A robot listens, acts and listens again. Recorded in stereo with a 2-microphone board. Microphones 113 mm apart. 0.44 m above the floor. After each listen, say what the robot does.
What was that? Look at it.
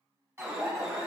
Turn 25° right.
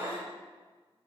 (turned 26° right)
Turn 130° right.
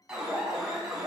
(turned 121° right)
Turn 10° right.
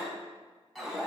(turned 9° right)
Found it: an alarm, straight ahead.